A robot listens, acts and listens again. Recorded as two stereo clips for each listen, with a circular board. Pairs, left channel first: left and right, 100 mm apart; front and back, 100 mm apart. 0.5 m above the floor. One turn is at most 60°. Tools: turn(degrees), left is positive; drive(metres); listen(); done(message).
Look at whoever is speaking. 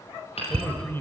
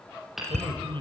turn(degrees=60)
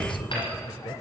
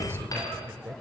turn(degrees=60)
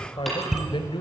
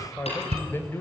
turn(degrees=60)
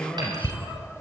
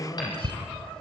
turn(degrees=15)
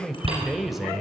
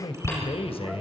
done("Facing the man speaking.")